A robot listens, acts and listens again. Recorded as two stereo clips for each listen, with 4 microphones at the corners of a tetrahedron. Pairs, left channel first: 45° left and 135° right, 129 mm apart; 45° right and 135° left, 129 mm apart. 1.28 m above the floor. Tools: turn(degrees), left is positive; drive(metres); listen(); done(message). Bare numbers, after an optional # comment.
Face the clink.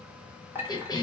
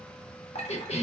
# The clink: 65° right.
turn(-65)
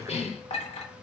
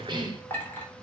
# The clink is now 25° left.
turn(25)
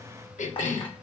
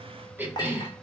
done("Facing the clink.")